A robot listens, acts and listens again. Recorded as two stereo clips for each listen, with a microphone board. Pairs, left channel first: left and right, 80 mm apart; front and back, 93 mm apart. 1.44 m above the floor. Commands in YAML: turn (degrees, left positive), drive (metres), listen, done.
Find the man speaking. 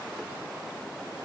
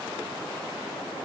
listen: true
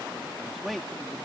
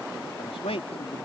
done: "Facing the man speaking."